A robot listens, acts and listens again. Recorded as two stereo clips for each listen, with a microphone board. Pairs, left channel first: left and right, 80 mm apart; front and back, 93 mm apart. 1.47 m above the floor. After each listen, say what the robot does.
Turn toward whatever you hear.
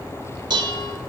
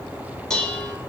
Turn 85° right.
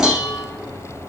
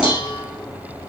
Found it: dishes clattering, straight ahead.